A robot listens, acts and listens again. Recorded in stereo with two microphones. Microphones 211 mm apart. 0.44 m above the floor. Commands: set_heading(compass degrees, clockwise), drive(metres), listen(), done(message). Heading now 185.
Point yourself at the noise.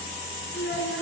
set_heading(120)
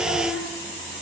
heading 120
done("Found it: a child speaking, straight ahead, over 4 m away.")